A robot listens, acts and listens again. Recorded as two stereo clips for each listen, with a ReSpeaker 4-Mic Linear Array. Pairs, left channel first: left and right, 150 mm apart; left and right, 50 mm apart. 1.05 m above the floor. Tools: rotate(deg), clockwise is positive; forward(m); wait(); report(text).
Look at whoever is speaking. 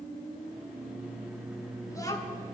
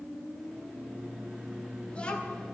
rotate(-20)
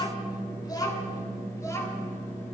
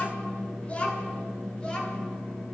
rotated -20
rotate(-20)
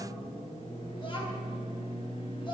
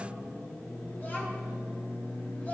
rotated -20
wait()
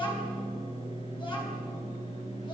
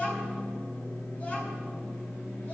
rotate(-30)
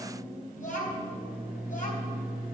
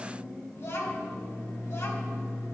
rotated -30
rotate(-120)
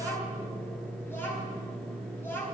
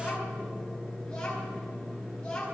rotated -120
rotate(-15)
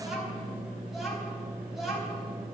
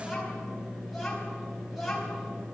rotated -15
report("Facing the child speaking.")